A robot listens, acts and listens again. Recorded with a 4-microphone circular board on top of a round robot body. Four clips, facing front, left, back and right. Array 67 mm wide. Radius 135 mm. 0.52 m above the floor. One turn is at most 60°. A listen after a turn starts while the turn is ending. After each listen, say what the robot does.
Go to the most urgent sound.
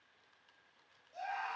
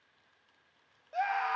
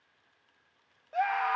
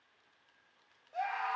Turn 60° left.
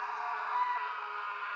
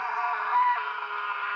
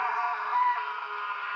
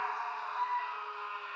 Turn 60° left.
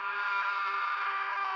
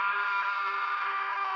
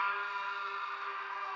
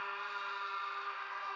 Turn 45° left.
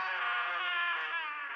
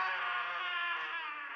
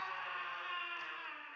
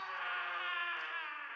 Drive 1.0 m forward.
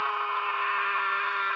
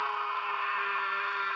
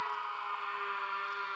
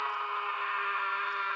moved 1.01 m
Drive 1.0 m forward.
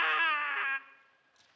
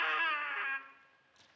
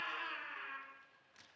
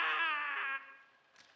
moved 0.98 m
Drive 1.0 m forward.
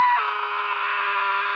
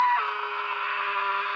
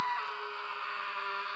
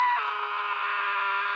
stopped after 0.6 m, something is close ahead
I am next to the scream.